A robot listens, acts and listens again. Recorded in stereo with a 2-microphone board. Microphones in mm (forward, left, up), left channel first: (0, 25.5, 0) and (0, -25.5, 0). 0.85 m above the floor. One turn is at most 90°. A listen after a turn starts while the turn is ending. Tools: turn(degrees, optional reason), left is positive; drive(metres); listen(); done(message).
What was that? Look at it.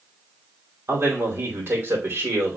turn(degrees=-45, reason="The man speaking: about 45° right or 135° right.")
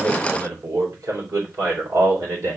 turn(degrees=-75, reason="So it is at 75° right.")
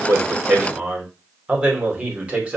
turn(degrees=-25, reason="The man speaking is now 25° right.")
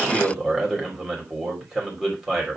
done("Facing the man speaking, 2 to 4 m away.")